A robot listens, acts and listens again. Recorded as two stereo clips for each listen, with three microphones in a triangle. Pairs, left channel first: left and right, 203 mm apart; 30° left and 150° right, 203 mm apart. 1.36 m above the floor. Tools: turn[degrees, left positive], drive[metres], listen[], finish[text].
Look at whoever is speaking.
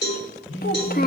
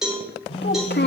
Thought: The child speaking: 55° left.
Action: turn[55]
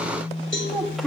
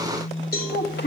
Action: finish[Found it: a child speaking, straight ahead, 1 to 2 m away.]